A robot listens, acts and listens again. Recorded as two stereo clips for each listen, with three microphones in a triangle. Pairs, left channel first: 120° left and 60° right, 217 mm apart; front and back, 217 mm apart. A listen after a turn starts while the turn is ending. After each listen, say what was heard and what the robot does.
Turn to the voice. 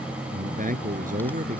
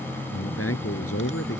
Facing the man speaking.